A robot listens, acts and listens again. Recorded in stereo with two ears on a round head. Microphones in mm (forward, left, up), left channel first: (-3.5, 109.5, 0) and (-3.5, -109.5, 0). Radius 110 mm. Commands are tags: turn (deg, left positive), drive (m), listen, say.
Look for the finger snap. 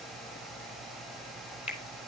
<turn deg="25"/>
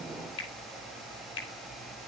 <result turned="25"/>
<turn deg="130"/>
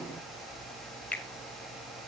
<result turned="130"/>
<say>Facing the finger snap.</say>